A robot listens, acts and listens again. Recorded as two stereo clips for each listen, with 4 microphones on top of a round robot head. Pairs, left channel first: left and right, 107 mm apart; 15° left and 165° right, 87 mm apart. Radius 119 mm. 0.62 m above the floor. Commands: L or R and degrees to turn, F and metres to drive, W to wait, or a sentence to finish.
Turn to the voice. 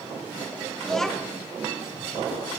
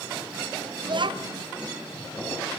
L175
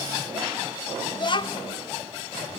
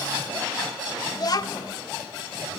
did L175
L50
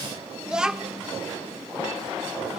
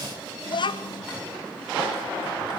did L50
Facing the child speaking.